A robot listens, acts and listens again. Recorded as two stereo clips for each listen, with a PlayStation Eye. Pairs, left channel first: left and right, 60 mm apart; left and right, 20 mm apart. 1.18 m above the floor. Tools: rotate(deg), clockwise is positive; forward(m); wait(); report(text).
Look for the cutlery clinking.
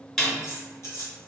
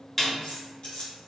rotate(-50)
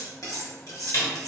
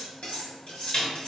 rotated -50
rotate(-75)
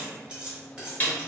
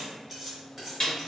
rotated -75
rotate(15)
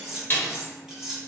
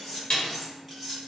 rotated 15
rotate(10)
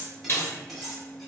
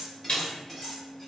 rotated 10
report("Facing the cutlery clinking, 1 to 2 m away.")